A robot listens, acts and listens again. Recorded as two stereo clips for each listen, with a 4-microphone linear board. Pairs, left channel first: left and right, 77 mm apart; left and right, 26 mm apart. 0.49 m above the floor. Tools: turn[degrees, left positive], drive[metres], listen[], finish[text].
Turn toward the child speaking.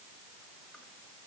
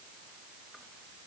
Action: listen[]
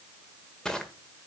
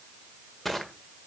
Action: listen[]
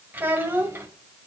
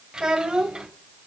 Thought: The child speaking: about 25° right or 155° right.
Action: turn[-25]
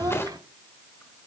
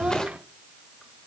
Thought: So it is at 130° right.
Action: turn[-130]
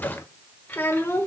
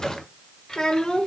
Thought: The child speaking is now 30° left.
Action: turn[30]
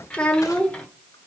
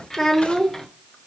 Thought: The child speaking is now 15° left.
Action: turn[15]
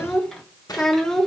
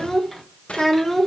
Action: finish[Found it: a child speaking, straight ahead, 1 to 2 m away.]